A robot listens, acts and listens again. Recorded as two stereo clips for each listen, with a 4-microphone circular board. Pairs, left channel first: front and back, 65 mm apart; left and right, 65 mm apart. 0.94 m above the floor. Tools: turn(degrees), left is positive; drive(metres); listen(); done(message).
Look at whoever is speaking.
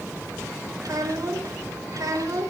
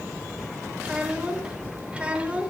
turn(degrees=-160)
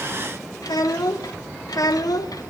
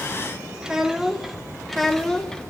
turn(degrees=10)
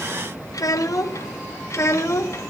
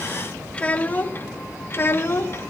turn(degrees=40)
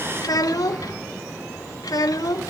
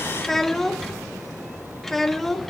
done("Found it: a child speaking, straight ahead.")